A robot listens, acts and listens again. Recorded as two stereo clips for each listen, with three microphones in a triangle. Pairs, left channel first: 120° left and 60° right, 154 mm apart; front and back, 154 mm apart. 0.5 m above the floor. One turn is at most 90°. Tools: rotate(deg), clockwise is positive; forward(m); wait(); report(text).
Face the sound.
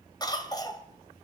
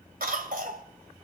rotate(-90)
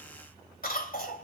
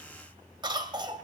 rotate(-90)
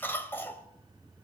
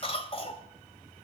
rotate(-45)
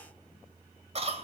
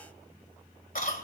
rotate(15)
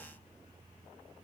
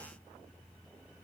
wait()
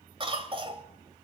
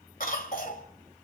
rotate(10)
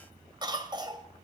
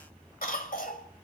report("Facing the cough, 2 to 4 m away.")